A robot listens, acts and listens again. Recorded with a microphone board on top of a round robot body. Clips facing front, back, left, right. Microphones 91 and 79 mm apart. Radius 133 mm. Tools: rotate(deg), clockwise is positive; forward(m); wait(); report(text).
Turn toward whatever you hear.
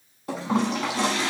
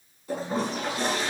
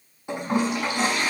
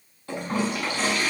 rotate(-20)
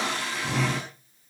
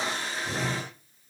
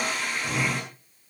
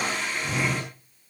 report("Found it: a toilet flushing, straight ahead.")